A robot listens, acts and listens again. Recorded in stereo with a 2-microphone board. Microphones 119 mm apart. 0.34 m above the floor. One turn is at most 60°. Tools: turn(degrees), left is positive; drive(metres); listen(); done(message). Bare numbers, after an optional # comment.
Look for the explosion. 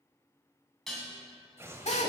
# The explosion: about 20° right or 160° right.
turn(-20)
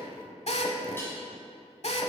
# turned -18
listen()
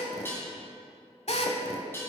done("I heard an explosion, but can't make it out now. It was about 5° right or 140° right.")